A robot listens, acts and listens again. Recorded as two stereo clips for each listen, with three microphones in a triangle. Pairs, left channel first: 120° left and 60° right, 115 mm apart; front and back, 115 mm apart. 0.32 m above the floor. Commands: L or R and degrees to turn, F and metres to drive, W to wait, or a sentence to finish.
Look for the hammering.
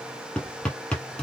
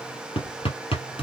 L40
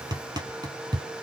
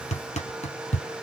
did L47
Facing the hammering.